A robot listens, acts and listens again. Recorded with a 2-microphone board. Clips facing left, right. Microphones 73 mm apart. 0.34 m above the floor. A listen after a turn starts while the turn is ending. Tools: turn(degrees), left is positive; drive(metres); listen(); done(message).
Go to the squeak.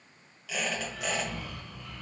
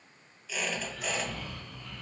turn(degrees=70)
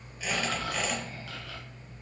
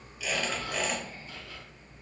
drive(metres=1.0)
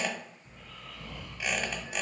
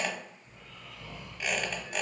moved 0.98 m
drive(metres=1.0)
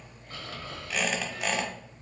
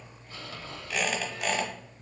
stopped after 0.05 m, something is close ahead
done("Arrived at the squeak, straight ahead.")